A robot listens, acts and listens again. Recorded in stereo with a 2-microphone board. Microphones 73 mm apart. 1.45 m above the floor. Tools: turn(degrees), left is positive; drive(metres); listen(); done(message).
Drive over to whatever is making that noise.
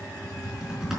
turn(degrees=-30)
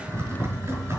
turn(degrees=-145)
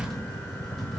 drive(metres=1.0)
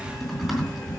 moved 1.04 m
drive(metres=1.0)
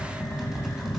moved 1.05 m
turn(degrees=-10)
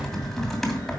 drive(metres=1.0)
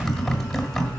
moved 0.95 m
drive(metres=1.0)
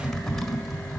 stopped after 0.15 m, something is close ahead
done("I am next to the typing on a keyboard.")